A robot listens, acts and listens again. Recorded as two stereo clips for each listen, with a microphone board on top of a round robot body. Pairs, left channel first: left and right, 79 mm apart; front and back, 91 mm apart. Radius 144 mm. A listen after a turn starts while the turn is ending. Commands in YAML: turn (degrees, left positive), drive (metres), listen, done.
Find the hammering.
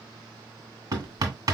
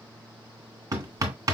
turn: -125
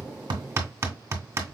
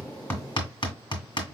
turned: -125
turn: -30
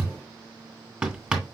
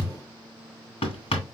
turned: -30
done: "Found it: hammering, straight ahead, 1 to 2 m away."